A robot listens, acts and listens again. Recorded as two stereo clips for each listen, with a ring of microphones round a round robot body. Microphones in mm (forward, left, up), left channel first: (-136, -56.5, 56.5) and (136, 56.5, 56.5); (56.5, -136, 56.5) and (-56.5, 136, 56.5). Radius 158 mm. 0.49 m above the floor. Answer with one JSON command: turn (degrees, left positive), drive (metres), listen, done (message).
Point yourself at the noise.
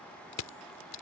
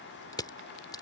{"turn": -145}
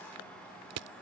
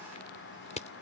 {"done": "Facing the crushing."}